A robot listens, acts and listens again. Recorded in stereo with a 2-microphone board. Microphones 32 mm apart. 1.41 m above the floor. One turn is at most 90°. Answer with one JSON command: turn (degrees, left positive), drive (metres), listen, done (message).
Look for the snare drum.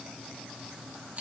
{"listen": true}
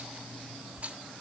{"listen": true}
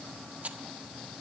{"done": "I can't make out a snare drum, only a rattle."}